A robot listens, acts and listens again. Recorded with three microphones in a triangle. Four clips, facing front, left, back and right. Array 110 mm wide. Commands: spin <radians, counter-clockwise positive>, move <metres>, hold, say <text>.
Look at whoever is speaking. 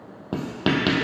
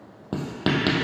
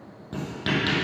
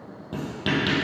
hold
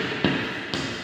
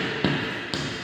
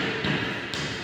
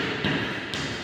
hold
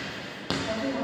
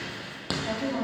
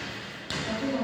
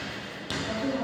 spin 1.57
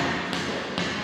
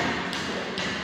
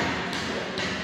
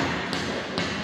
hold
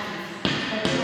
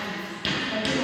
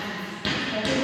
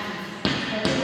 hold
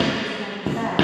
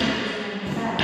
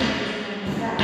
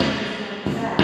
say Found it: a woman speaking, straight ahead.